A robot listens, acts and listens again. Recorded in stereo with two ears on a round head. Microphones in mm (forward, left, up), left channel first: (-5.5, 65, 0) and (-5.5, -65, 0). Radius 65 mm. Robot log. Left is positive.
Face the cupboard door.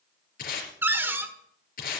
note: The cupboard door: about 15° right or 165° right.
cmd yaw -15
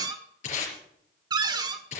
note: So it is at 150° right.
cmd yaw -150
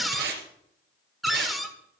end: Facing the cupboard door.